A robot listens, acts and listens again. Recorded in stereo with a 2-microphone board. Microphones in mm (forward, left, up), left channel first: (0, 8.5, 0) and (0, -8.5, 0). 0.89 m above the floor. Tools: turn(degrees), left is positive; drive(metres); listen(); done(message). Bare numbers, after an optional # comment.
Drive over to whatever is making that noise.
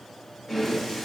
# The breathing: about 25° left or 155° left.
turn(25)
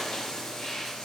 # So it is at 125° left.
turn(125)
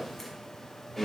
drive(1.0)
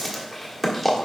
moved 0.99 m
drive(1.0)
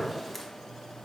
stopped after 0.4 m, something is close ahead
listen()
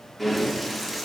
# The breathing is now 10° right.
turn(-10)
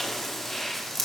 done("I am next to the breathing.")